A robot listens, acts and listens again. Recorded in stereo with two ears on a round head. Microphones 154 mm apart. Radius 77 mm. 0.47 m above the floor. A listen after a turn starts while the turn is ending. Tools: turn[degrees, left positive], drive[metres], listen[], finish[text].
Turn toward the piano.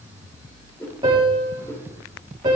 Thought: The piano: about 25° right or 155° right.
Action: turn[-25]
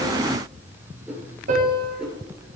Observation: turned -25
Thought: So it is at 130° right.
Action: turn[-130]
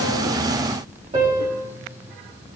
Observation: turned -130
Thought: The piano is now 35° right.
Action: turn[-35]
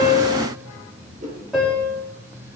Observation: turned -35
Action: finish[Facing the piano.]